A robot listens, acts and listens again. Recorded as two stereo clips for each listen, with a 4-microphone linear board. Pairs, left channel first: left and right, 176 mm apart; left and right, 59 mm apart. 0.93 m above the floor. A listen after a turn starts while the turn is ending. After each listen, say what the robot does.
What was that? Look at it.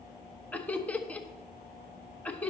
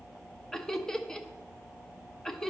Turn 30° left.
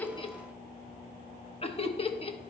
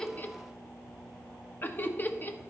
Turn 140° left.
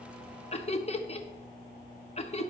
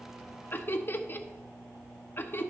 Turn 45° left.
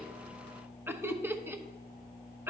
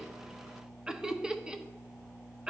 Turn 15° right.
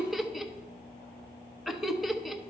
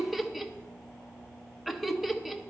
Found it: laughter, straight ahead.